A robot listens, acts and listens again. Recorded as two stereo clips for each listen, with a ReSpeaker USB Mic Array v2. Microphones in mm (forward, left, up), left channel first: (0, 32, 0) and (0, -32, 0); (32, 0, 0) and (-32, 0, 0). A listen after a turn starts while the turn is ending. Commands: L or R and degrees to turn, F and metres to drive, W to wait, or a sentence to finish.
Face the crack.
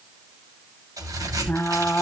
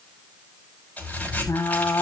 R65
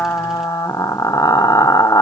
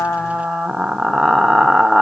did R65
I heard a crack from this way, but can't make it out now.